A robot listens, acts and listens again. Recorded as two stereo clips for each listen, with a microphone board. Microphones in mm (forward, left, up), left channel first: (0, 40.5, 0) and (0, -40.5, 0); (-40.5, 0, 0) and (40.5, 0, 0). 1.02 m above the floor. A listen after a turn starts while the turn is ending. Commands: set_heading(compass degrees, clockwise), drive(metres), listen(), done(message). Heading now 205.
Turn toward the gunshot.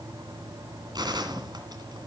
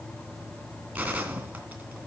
set_heading(270)
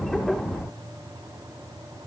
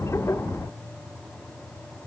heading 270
done("Facing where the gunshot came from. I can't hear it now.")